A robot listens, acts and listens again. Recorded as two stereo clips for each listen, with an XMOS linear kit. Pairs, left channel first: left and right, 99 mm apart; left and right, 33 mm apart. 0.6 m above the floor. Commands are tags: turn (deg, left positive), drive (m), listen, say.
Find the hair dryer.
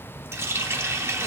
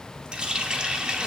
<listen/>
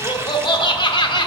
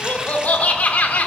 <listen/>
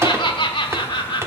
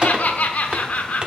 <say>I can't make out a hair dryer, only a running tap and laughter.</say>